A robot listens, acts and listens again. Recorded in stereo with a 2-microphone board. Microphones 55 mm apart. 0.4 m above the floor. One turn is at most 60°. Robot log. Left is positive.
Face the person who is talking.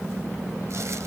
cmd idle
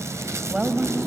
cmd yaw -30
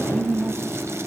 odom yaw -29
note: So it is at 135° right.
cmd yaw -60
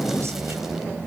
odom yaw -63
note: Nothing new. It was at 70° right.
cmd yaw -60
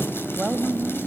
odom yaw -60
note: The woman speaking is now 15° right.
cmd yaw -15
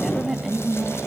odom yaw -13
end: Found it: a woman speaking, straight ahead.